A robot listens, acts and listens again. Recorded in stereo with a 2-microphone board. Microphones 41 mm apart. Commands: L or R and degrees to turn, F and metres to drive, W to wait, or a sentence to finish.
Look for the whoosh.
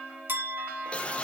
L25
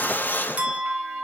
L120
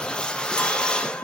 L25
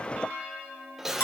R10
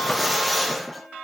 Found it: a whoosh, straight ahead, 1 to 2 m away.